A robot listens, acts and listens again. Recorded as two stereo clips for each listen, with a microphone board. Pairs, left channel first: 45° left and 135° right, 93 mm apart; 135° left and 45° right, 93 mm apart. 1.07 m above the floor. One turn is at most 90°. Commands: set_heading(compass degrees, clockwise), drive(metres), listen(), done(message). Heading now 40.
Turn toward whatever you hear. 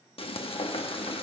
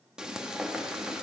set_heading(5)
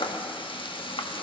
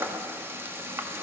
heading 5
set_heading(345)
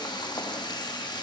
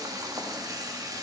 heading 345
done("Found it: frying, straight ahead.")